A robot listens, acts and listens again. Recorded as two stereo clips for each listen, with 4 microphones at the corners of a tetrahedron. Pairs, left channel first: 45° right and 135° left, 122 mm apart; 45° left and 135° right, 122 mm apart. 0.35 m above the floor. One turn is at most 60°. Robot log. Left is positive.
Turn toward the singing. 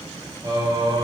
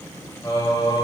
note: The singing: 90° left.
cmd yaw +60
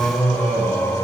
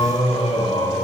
note: The singing is now 20° left.
cmd yaw +20
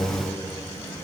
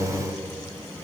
note: The singing is now 15° right.
cmd yaw -15
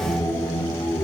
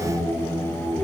note: The singing is now 25° right.
cmd yaw -25
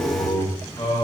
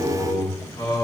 note: The singing is now 20° right.
cmd yaw -20
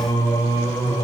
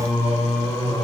end: Facing the singing.